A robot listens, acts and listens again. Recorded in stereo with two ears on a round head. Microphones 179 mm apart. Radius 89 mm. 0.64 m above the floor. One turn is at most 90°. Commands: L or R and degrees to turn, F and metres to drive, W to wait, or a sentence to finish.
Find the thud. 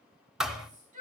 L30
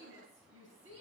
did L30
W
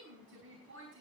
I heard a thud, but can't make it out now. It was about 30° right or 150° left.